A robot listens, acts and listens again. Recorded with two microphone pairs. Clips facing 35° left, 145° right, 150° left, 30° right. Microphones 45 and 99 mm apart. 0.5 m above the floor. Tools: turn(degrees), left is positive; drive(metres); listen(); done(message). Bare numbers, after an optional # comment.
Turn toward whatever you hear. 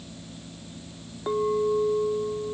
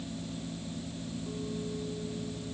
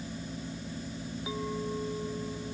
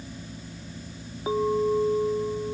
# The clink: 20° left.
turn(20)
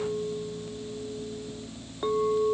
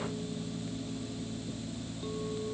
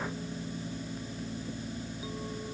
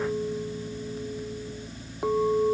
done("Facing the clink.")